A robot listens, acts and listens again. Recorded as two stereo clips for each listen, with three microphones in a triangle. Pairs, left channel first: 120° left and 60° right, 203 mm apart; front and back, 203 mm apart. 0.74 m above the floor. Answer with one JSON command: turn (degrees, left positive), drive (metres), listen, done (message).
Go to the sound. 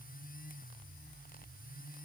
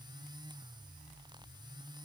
{"listen": true}
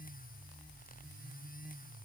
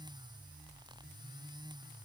{"listen": true}
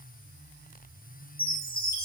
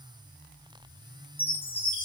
{"turn": 80}
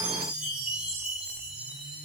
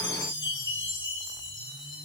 {"turn": 25}
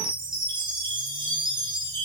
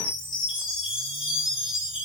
{"turn": 10}
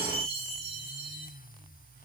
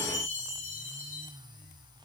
{"drive": 1.0}
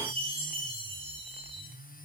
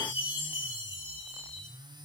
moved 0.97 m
{"drive": 1.0}
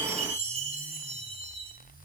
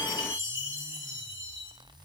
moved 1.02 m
{"drive": 1.0}
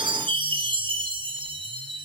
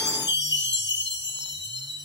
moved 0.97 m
{"drive": 1.0}
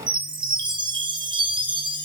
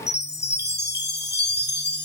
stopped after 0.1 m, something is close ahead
{"done": "I am next to the chime."}